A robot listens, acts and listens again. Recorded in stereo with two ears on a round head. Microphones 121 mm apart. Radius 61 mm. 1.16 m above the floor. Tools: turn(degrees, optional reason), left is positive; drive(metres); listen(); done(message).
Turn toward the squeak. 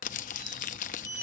turn(degrees=-90)
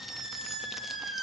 done("Facing the squeak, 2 to 4 m away.")